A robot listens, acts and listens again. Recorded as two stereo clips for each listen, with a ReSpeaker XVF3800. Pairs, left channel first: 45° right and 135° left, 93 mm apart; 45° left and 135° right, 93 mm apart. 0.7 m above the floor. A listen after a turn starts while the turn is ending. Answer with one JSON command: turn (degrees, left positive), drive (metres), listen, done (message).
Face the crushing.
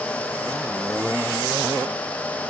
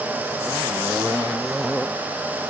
{"listen": true}
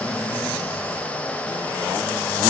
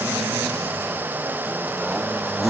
{"listen": true}
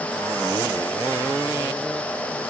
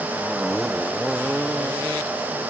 {"done": "I can't make out crushing to turn to."}